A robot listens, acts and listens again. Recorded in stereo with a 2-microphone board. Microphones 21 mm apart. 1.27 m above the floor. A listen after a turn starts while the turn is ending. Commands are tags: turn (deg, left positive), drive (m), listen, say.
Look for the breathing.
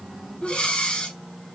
<turn deg="60"/>
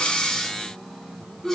<turn deg="15"/>
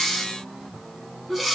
<say>Found it: breathing, straight ahead.</say>